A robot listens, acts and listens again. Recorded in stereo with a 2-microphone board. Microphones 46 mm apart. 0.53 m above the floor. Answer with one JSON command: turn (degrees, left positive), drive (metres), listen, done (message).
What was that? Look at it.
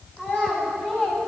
{"turn": 30}
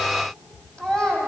{"turn": 20}
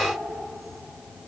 {"listen": true}
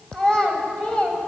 {"turn": 25}
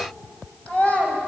{"turn": 30}
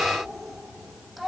{"done": "Facing the child speaking."}